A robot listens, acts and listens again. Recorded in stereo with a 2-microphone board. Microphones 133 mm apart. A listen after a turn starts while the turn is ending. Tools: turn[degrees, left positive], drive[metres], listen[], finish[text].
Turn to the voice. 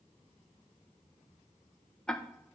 Action: listen[]
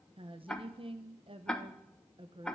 Thought: The woman speaking: about 40° right or 140° right.
Action: turn[-40]
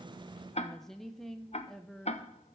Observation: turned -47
Action: finish[Found it: a woman speaking, straight ahead.]